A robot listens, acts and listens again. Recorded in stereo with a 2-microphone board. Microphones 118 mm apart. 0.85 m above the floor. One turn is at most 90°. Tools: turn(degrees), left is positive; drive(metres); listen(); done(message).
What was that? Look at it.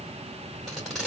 turn(degrees=30)
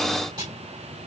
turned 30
turn(degrees=-35)
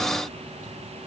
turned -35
listen()
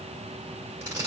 turn(degrees=-20)
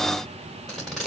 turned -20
done("Found it: tape being pulled, straight ahead.")